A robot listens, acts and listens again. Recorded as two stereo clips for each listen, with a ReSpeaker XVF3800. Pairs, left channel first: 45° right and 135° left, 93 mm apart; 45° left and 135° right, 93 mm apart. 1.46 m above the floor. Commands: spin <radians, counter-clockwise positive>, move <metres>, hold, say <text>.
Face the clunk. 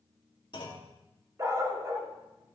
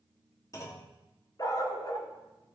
spin -0.17
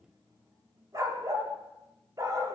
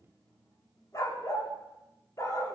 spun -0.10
say I heard a clunk from this way, but can't make it out now.